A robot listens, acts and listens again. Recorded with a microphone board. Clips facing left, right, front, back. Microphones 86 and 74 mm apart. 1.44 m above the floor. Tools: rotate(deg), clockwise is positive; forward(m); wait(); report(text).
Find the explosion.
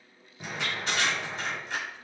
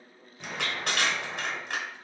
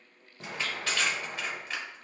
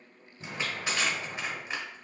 report("Found it: an explosion, straight ahead.")